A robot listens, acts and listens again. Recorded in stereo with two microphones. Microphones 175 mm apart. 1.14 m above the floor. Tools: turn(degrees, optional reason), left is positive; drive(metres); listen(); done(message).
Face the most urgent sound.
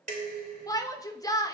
turn(degrees=20, reason="The shout: about 20° left or 160° left.")
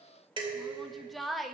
done("Facing the shout, 1 to 2 m away.")